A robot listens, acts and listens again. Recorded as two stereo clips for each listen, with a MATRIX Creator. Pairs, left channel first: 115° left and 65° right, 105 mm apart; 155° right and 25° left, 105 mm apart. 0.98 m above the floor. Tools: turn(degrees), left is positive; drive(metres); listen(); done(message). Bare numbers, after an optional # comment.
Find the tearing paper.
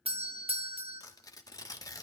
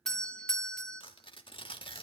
# The tearing paper: 170° left.
turn(170)
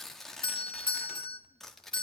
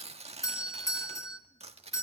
# The tearing paper is now 25° left.
turn(25)
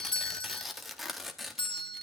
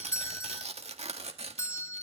# The tearing paper is now 20° left.
turn(20)
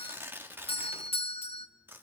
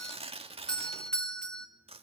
done("Found it: tearing paper, straight ahead, 1 to 2 m away.")